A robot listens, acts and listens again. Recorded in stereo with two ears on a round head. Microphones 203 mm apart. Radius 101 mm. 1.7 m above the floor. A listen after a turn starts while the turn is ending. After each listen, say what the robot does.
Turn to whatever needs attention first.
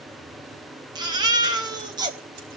Turn 20° right.
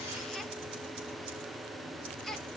Found it: a baby crying, straight ahead.